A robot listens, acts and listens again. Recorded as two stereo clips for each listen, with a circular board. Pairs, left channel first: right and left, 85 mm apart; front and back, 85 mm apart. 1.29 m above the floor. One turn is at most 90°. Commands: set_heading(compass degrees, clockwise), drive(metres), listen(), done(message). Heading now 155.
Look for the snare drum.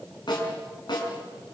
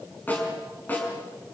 set_heading(225)
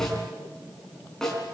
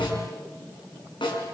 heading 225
done("Found it: a snare drum, straight ahead, over 4 m away.")